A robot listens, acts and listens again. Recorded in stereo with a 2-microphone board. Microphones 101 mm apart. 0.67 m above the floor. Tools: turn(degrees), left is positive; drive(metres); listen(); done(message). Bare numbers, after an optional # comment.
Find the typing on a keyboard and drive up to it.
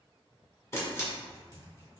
# The typing on a keyboard: about 35° right or 145° right.
turn(-35)
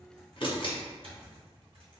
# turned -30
# So it is at 115° right.
turn(-115)
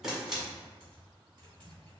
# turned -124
# The typing on a keyboard is now 10° left.
turn(10)
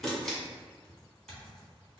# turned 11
drive(1.0)
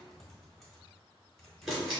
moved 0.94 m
drive(1.0)
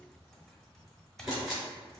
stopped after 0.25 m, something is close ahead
done("Arrived at the typing on a keyboard, straight ahead.")